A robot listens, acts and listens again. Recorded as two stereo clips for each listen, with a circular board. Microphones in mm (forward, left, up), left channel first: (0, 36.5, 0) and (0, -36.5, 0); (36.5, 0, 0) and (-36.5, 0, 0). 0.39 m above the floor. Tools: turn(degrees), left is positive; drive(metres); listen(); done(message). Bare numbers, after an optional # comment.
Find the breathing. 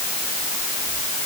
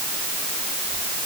listen()
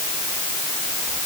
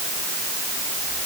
listen()
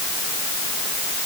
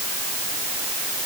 done("I can't make out breathing.")